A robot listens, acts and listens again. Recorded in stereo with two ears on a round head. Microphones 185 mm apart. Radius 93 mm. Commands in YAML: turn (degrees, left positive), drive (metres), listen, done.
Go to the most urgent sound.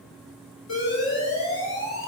turn: 70
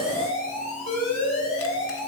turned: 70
turn: 40
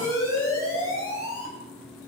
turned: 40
turn: 15
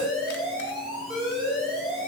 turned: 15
drive: 1.0
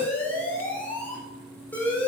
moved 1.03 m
turn: 10
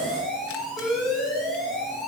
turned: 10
drive: 1.0
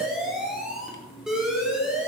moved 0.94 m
drive: 1.0
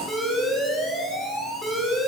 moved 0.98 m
drive: 1.0
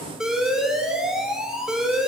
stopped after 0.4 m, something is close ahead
done: "I am next to the alarm."